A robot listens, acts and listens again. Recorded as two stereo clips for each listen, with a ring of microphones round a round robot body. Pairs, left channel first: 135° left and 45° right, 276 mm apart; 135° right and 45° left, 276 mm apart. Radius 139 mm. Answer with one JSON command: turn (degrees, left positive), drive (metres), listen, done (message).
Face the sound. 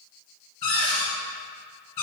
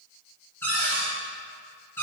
{"turn": 145}
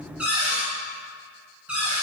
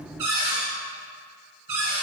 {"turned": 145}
{"turn": 40}
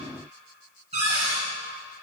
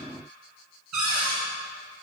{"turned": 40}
{"turn": 20}
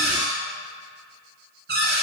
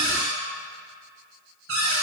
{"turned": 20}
{"done": "Found it: a cupboard door, straight ahead, 1 to 2 m away."}